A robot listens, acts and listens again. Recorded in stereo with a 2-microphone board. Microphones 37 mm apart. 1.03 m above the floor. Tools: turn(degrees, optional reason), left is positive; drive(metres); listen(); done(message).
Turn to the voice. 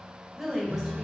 turn(degrees=-15, reason="The woman speaking: about 15° right or 165° right.")
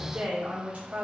turn(degrees=-45, reason="The woman speaking: about 45° right or 135° right.")
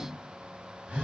listen()
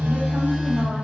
listen()
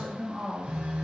turn(degrees=-25, reason="So it is at 25° right.")
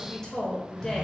turn(degrees=15, reason="The woman speaking is now 15° left.")
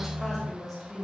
done("Found it: a woman speaking, straight ahead, 1 to 2 m away.")